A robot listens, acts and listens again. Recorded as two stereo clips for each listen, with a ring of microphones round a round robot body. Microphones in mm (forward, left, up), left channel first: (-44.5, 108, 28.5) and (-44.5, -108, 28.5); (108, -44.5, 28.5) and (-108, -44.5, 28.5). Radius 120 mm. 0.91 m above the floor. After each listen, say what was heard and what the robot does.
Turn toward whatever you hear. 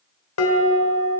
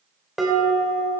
The dishes clattering: 90° left. Turn 90° left.
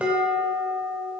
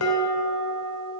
Found it: dishes clattering, straight ahead.